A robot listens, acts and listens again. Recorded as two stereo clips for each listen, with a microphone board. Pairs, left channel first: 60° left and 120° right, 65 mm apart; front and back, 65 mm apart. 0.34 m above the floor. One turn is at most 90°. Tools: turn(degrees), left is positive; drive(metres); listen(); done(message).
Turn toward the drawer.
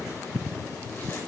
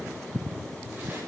listen()
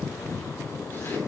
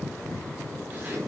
listen()
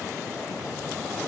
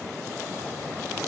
done("I can't make out a drawer to turn to.")